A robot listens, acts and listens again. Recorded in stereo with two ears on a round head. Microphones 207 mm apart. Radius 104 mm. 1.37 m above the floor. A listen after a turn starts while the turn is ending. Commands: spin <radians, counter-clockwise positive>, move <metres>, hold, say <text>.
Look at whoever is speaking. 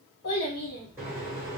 spin 0.79
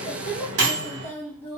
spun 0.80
spin 0.17
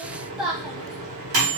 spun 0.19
say Found it: a child speaking, straight ahead, 1 to 2 m away.